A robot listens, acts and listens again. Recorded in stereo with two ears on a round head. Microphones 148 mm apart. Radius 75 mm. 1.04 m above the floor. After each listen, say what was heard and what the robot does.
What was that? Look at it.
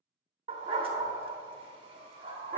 The dog barking: about 30° right or 150° right. Turn 30° right.
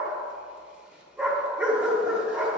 Found it: a dog barking, straight ahead.